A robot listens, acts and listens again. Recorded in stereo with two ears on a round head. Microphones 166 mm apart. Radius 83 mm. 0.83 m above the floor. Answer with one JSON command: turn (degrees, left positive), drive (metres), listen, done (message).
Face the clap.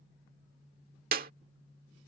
{"turn": -50}
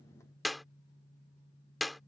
{"done": "Found it: a clap, straight ahead."}